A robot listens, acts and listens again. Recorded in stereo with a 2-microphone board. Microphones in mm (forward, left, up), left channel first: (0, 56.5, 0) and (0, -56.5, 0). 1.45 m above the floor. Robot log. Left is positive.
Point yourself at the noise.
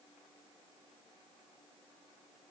cmd idle
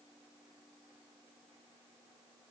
cmd idle
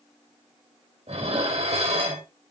note: The dishes clattering: about 65° right or 115° right.
cmd yaw -65
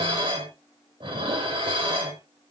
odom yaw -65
note: So it is at 50° right.
cmd yaw -50
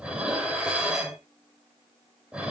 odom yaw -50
note: The dishes clattering is now 10° right.
cmd yaw -10
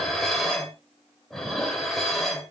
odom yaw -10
end: Found it: dishes clattering, straight ahead, 2 to 4 m away.